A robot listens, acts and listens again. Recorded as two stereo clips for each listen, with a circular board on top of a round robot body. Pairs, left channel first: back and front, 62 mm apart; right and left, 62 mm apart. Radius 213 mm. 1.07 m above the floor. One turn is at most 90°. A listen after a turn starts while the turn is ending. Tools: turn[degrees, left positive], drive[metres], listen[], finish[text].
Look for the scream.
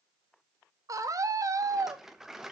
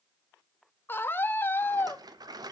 Thought: The scream: 35° right.
Action: turn[-35]
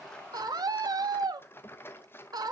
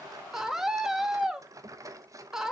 Action: finish[Found it: a scream, straight ahead.]